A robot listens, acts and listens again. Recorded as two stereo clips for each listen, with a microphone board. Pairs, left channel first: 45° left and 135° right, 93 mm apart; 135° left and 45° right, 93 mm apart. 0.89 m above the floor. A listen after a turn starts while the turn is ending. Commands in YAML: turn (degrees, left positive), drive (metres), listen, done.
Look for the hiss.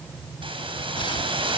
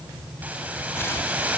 turn: -115
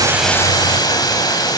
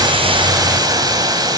done: "Facing the hiss, over 4 m away."